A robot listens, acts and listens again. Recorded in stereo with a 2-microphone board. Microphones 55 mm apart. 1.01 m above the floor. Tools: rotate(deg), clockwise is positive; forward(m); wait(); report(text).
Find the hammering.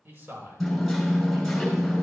rotate(-30)
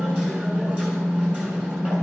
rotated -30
rotate(30)
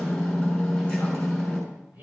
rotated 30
rotate(-10)
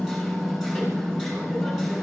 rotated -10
report("Found it: hammering, straight ahead, over 4 m away.")